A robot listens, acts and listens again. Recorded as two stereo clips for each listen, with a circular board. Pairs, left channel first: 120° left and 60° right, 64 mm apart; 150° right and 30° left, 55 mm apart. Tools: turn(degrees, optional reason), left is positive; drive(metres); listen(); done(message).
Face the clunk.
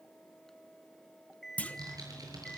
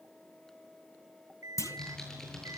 turn(degrees=-175, reason="The clunk: 175° right.")
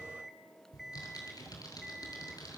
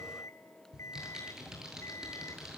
done("Facing where the clunk came from. I can't hear it now.")